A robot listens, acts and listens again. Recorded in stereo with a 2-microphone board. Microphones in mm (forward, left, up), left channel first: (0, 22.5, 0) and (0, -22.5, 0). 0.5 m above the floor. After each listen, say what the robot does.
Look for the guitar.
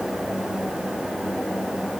Keep listening.
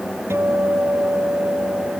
Turn 70° right.
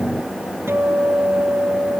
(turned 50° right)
Turn 60° right.
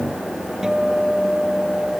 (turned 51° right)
Turn 10° right.
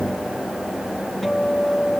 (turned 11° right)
Facing the guitar.